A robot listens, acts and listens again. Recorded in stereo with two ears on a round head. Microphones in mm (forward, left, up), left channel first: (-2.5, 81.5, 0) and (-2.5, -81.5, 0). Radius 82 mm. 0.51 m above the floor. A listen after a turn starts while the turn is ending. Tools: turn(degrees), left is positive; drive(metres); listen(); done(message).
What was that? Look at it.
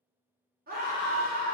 turn(degrees=-55)
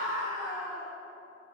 turn(degrees=-10)
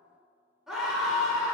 done("Found it: a scream, straight ahead, 1 to 2 m away.")